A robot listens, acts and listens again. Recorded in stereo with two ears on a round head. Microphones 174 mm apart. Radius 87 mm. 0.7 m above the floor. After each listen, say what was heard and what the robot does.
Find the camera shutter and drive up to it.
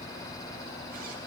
Keep listening.
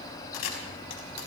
Turn 90° left.
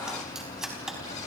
Drive 1.0 m forward.
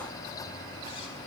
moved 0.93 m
Keep listening.
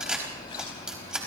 Drive 1.0 m forward.
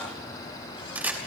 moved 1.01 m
The camera shutter is now 10° right. Turn 10° right.
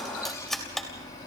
Drive 1.0 m forward.
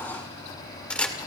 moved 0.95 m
Drive 1.0 m forward.
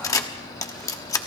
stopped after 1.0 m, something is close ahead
The camera shutter is now 20° left. Turn 20° left.
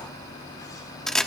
I am next to the camera shutter.